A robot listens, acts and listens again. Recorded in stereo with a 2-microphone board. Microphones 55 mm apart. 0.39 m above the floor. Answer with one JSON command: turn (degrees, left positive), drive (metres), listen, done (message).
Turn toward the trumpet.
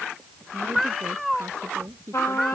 {"turn": 55}
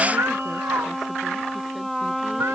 {"done": "Found it: a trumpet, straight ahead."}